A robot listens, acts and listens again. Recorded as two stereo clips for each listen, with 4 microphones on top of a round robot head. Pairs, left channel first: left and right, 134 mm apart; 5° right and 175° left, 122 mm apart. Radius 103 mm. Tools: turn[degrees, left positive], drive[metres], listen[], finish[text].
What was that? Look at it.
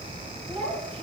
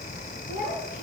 Thought: The child speaking: 25° right.
Action: turn[-25]
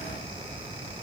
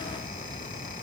Action: listen[]
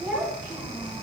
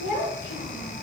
Action: finish[Found it: a child speaking, straight ahead, 2 to 4 m away.]